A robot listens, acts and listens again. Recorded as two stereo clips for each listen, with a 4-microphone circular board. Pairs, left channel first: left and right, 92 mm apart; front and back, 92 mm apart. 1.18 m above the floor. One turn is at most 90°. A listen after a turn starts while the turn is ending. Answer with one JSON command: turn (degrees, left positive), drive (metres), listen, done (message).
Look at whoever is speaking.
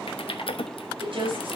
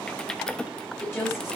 {"turn": -65}
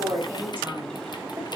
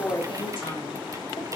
{"listen": true}
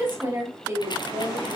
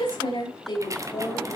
{"turn": -20}
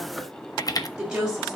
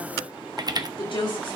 {"turn": -10}
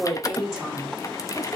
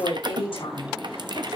{"done": "Facing the woman speaking, over 4 m away."}